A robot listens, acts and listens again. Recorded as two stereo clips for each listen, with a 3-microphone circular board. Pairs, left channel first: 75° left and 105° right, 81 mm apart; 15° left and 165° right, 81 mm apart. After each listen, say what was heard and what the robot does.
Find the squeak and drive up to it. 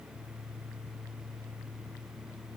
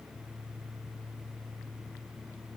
Keep listening.
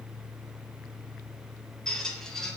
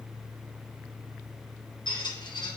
The squeak: 10° right. Turn 10° right.
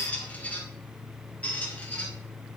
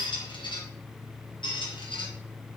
Drive 1.0 m forward.
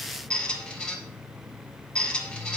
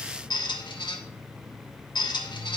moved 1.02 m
Drive 1.0 m forward.
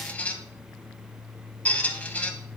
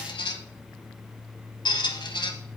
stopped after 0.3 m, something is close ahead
I am next to the squeak.